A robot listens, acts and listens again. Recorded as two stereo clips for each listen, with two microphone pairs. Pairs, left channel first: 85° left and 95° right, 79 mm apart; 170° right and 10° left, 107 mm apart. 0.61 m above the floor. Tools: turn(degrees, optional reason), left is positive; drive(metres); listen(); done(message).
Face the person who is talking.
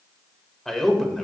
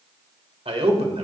done("Facing the man speaking.")